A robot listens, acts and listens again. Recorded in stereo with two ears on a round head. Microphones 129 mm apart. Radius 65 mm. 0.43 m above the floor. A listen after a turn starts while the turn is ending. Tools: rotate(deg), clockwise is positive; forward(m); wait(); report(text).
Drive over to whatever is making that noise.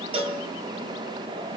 rotate(40)
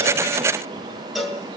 forward(1.0)
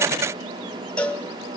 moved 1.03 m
rotate(-10)
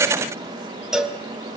forward(1.0)
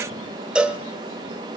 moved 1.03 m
forward(1.0)
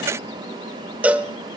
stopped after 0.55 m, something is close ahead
rotate(10)
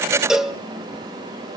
report("I am next to the cowbell.")